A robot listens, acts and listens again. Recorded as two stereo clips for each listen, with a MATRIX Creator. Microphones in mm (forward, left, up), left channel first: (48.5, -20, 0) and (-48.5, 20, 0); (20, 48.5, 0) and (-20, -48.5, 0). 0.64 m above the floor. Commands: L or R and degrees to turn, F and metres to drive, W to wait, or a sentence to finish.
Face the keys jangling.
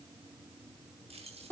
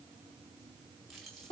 L155
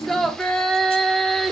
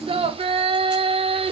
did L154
W
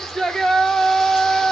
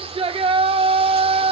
W
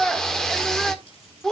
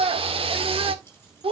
Facing where the keys jangling came from. I can't hear it now.